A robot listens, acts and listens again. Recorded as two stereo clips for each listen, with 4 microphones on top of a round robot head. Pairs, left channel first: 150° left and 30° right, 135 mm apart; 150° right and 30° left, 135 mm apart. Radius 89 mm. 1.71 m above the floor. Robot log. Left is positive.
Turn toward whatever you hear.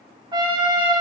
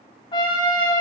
note: The trumpet: 90° right.
cmd yaw -90
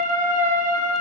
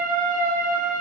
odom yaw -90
end: Facing the trumpet, 1 to 2 m away.